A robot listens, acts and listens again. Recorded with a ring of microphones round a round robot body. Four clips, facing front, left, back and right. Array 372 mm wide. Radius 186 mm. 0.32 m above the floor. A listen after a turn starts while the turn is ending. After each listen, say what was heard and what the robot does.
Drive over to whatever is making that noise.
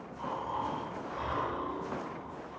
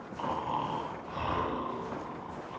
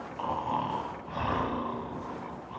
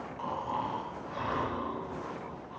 The snoring: 170° left. Turn 170° left.
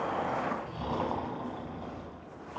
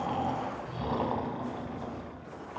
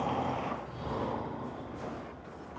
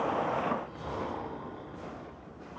The snoring is now 55° left. Turn 55° left.
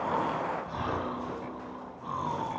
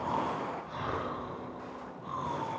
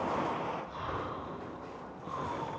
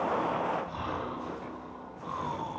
The snoring is now 20° right. Turn 20° right.
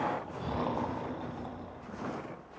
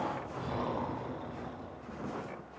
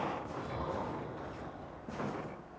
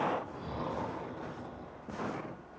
Drive 1.0 m forward.
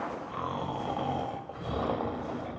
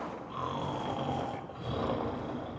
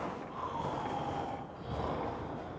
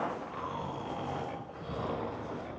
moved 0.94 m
The snoring is now 15° left. Turn 15° left.
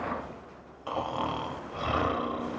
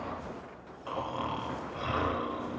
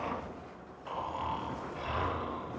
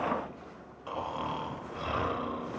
Drive 1.0 m forward.
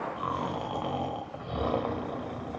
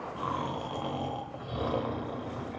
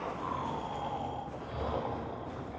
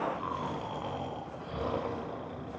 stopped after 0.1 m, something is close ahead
The snoring is now 10° left. Turn 10° left.
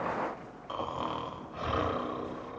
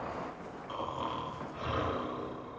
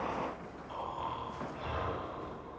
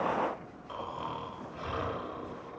I am next to the snoring.